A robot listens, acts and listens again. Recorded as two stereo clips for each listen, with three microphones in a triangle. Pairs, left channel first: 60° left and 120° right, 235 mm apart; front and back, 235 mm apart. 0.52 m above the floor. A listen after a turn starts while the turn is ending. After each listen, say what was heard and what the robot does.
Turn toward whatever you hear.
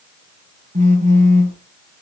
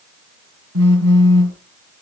The phone buzzing: 175° right. Turn 175° right.
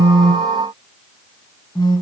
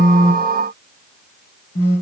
The phone buzzing is now 15° right. Turn 15° right.
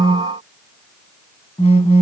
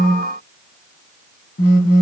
Facing the phone buzzing, 1 to 2 m away.